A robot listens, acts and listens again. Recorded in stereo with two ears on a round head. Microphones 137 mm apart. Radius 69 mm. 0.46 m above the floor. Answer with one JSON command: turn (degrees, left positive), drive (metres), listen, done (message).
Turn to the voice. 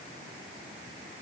{"listen": true}
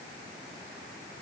{"listen": true}
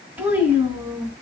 {"turn": -15}
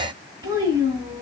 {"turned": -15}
{"turn": -150}
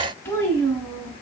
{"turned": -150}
{"turn": 20}
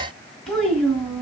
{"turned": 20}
{"done": "Found it: a child speaking, straight ahead."}